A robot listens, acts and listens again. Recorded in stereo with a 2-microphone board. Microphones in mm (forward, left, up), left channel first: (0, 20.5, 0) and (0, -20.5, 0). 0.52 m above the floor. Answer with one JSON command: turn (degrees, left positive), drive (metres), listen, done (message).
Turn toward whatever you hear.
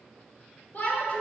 {"turn": 45}
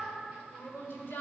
{"turn": 85}
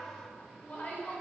{"turn": 45}
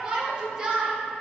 {"turn": -25}
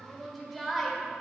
{"done": "Facing the shout, 1 to 2 m away."}